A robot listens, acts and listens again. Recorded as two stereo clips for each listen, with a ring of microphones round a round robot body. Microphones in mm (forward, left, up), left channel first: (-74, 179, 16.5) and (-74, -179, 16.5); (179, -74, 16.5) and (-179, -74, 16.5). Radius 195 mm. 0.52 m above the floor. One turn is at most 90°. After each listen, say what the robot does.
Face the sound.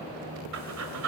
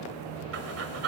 Turn 90° right.
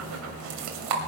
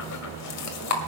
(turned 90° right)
Turn 45° right.
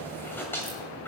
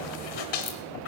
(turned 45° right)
Found it: breathing, straight ahead, 1 to 2 m away.